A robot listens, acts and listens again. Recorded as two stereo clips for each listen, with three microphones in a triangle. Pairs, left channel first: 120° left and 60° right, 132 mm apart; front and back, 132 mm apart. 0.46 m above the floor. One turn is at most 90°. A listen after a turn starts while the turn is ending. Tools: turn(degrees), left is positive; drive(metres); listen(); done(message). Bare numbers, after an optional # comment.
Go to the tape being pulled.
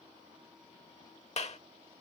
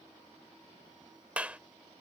listen()
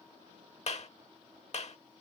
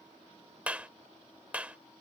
listen()
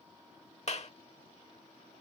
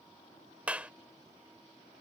done("I can't make out tape being pulled to turn to.")